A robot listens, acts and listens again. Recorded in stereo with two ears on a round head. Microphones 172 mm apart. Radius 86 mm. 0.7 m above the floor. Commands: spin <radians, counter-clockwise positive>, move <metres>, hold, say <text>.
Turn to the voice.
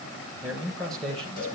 spin 0.52
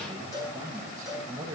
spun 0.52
spin -0.26
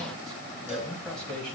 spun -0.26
say Found it: a man speaking, straight ahead.